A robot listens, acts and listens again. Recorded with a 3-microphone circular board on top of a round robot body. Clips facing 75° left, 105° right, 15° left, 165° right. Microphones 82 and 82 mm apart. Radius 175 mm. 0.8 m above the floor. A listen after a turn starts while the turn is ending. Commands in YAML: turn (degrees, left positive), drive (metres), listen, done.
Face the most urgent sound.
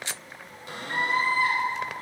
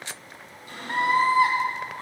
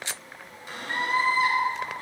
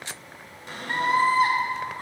turn: -110
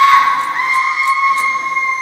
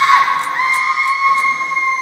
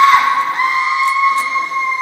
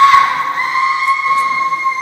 turn: -15
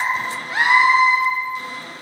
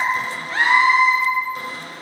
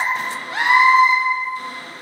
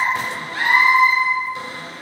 done: "Facing the scream."